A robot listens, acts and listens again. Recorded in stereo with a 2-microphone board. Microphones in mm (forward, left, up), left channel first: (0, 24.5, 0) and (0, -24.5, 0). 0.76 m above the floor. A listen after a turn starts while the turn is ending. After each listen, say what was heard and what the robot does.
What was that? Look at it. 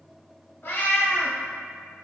The cat meowing: about 45° left or 135° left. Turn 45° left.
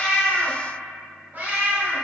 So it is at 50° right. Turn 50° right.
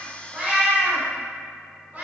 The cat meowing is now 40° right. Turn 40° right.
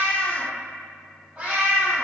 The cat meowing is now 30° right. Turn 30° right.
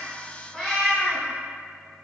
Found it: a cat meowing, straight ahead, 2 to 4 m away.